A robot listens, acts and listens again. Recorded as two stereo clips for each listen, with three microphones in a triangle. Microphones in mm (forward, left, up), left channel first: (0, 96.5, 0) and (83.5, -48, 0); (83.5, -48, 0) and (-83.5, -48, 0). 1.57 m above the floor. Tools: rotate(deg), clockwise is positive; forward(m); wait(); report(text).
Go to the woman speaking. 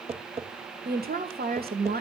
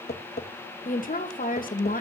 rotate(35)
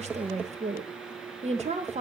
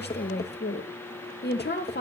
rotate(10)
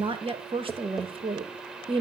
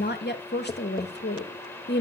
forward(1.0)
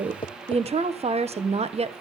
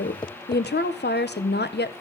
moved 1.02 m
forward(1.0)
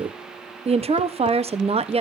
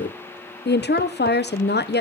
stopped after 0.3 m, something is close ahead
report("Arrived at the woman speaking, straight ahead.")